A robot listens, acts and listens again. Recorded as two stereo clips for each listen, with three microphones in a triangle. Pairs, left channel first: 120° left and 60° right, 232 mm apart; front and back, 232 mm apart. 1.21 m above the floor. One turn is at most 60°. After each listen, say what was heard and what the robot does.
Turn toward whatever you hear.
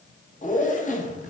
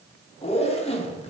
The zipper: 60° left. Turn 60° left.
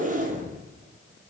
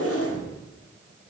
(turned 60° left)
Found it: a zipper, straight ahead, under 1 m away.